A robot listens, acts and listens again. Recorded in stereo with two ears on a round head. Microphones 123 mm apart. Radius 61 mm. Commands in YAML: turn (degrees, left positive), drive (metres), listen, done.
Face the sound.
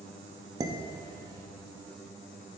turn: -30
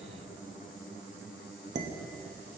turn: -120
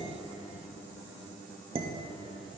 turn: -45
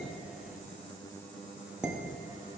done: "Found it: dishes clattering, straight ahead, under 1 m away."